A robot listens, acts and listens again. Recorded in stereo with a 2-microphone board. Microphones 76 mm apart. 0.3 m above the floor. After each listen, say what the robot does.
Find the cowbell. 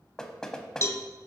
Turn 40° left.
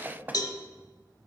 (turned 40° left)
Turn 95° left.
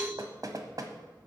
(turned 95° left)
Turn 15° left.
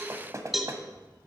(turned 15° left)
Facing the cowbell.